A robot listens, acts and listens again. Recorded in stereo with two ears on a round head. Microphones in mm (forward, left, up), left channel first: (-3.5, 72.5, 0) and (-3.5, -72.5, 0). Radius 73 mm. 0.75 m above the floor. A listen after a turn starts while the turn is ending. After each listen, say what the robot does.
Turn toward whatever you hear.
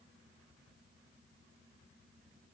Keep listening.
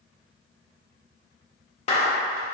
Turn 40° left.
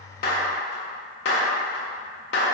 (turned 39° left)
Turn 100° left.
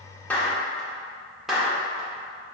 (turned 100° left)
Facing the clap, 1 to 2 m away.